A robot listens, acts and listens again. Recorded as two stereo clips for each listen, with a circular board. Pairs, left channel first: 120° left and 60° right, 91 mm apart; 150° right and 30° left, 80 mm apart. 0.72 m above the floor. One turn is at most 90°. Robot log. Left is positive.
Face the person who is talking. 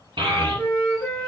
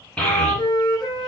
note: The child speaking: 75° right.
cmd yaw -75
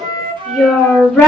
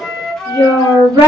note: The child speaking is now 25° left.
cmd yaw +25
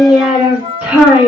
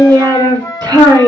note: The child speaking is now 10° left.
cmd yaw +10
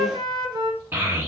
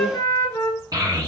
end: Found it: a child speaking, straight ahead.